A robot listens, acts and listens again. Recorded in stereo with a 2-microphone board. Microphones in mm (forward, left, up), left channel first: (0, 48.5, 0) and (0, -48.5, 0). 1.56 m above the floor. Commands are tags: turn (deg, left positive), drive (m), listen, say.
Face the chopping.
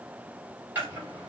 <turn deg="-20"/>
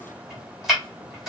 <say>Facing the chopping, 2 to 4 m away.</say>